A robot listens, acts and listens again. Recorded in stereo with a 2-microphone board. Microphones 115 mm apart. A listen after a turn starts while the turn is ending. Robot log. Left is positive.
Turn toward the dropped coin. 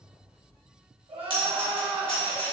note: The dropped coin: about 50° left or 130° left.
cmd yaw +50
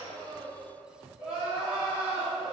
cmd idle
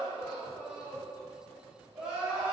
end: I heard a dropped coin, but can't make it out now. It was about straight ahead or 80° left.